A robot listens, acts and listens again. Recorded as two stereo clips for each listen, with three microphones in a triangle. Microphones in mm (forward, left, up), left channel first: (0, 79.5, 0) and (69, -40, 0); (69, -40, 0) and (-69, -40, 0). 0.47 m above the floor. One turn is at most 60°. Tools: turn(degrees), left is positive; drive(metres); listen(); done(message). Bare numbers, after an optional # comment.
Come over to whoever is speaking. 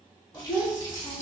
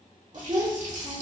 # The child speaking: 130° right.
turn(-60)
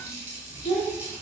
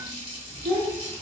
# The child speaking is now 80° right.
turn(-60)
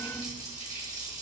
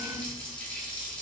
# Nothing new. It was at 20° right.
turn(-20)
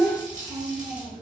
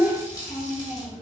drive(1.0)
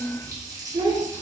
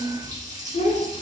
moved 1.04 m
# The child speaking is now 10° right.
turn(-10)
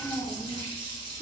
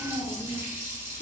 drive(1.0)
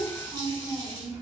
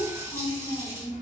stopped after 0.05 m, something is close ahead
done("Arrived at the child speaking, straight ahead.")